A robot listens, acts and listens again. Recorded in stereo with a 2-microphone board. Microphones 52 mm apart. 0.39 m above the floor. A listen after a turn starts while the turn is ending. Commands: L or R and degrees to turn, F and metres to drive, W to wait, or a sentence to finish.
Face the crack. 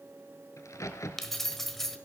L90
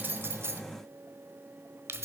I heard a crack from this way, but can't make it out now.